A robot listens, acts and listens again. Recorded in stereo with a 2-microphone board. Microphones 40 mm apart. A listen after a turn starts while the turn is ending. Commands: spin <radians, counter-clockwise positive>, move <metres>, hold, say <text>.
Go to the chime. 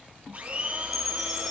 spin 0.52
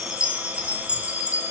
spin -0.44
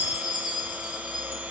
spin -0.17
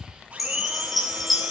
move 1.0
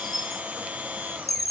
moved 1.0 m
move 1.0
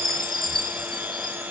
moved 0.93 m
spin 0.17
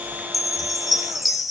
move 1.0
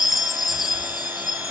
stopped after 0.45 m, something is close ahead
say Arrived at the chime, straight ahead.